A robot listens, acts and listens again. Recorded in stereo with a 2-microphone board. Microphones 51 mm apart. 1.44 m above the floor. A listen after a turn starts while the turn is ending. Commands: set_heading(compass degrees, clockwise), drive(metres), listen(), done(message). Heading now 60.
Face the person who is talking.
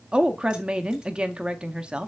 set_heading(80)
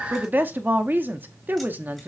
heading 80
set_heading(220)
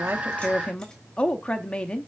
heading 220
set_heading(195)
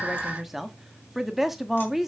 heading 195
done("Found it: a woman speaking, straight ahead, under 1 m away.")